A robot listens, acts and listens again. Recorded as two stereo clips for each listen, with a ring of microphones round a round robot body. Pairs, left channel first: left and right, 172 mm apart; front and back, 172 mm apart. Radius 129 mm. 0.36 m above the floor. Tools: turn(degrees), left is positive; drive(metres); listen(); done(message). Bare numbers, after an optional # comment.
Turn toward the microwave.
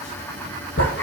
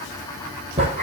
listen()
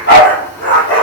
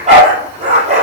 listen()
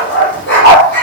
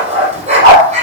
done("I can't make out a microwave, only a dog barking.")